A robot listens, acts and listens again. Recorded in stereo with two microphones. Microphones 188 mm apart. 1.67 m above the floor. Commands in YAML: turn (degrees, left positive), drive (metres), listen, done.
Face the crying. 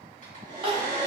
turn: -30
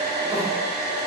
listen: true
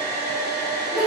done: "Facing the crying."